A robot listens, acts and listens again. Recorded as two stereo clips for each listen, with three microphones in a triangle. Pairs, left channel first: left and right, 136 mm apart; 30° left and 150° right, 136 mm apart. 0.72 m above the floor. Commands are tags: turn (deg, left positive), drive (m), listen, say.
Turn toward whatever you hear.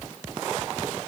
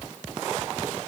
<listen/>
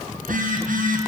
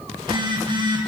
<turn deg="-95"/>
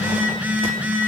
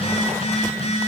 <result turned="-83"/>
<turn deg="-10"/>
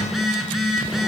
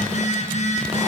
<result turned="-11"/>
<say>Facing the phone buzzing.</say>